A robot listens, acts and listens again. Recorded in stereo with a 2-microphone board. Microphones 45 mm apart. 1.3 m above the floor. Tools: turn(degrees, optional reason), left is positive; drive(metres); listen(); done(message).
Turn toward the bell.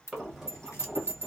turn(degrees=-60, reason="The bell: about 60° right or 120° right.")
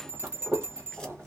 turn(degrees=-55, reason="So it is at 55° right.")
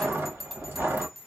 done("Found it: a bell, straight ahead.")